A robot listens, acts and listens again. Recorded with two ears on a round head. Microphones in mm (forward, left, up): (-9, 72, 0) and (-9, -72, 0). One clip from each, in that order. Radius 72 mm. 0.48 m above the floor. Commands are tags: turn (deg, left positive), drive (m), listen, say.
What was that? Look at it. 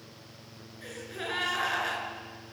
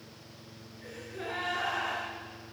<turn deg="60"/>
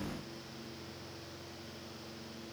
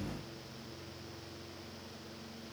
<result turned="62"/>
<listen/>
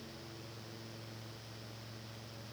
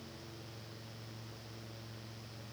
<say>I heard a gasp, but can't make it out now. It was about 5° right or 60° left.</say>